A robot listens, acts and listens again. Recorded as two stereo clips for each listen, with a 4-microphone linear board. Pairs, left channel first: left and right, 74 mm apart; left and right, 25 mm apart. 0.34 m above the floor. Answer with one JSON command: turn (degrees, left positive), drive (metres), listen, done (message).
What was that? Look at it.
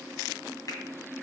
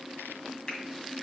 {"turn": 50}
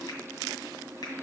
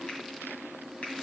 {"listen": true}
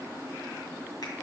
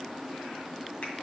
{"listen": true}
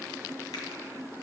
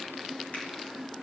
{"done": "I heard a finger snap, but can't make it out now. It was about straight ahead or 80° left."}